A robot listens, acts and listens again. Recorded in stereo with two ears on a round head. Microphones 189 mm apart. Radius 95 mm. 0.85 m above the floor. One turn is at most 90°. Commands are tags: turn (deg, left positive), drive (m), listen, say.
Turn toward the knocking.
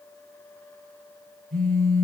<listen/>
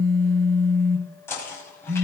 <turn deg="30"/>
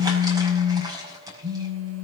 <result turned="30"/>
<turn deg="-15"/>
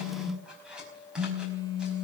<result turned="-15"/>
<say>Found it: knocking, straight ahead, over 4 m away.</say>